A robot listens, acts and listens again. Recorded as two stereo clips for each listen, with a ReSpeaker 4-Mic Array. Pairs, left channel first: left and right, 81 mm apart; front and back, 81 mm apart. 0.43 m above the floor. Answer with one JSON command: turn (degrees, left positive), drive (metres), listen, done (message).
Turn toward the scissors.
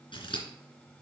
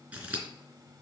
{"turn": 110}
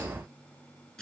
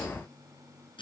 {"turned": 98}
{"turn": 15}
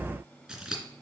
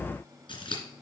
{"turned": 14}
{"done": "Found it: scissors, straight ahead."}